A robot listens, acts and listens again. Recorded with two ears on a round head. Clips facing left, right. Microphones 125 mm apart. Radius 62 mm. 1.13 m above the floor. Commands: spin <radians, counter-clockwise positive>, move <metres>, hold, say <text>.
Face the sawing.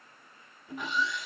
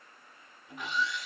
spin 1.57
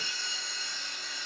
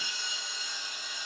spin -0.26
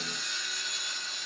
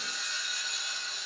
say Facing the sawing, under 1 m away.